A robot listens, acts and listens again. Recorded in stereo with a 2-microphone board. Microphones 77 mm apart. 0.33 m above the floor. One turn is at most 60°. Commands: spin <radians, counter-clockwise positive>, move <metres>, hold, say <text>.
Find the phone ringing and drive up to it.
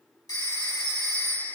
spin 0.87
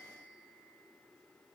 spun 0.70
hold
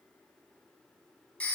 spin 0.26
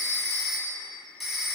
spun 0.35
move 1.0
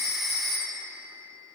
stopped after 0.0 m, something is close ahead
say Blocked. The phone ringing is further on, straight ahead.